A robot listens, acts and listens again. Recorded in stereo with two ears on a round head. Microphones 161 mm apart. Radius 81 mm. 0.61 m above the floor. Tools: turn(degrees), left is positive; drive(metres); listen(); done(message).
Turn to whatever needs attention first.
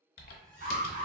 turn(degrees=-50)
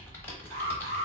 turn(degrees=-75)
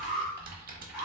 done("Facing the alarm, 1 to 2 m away.")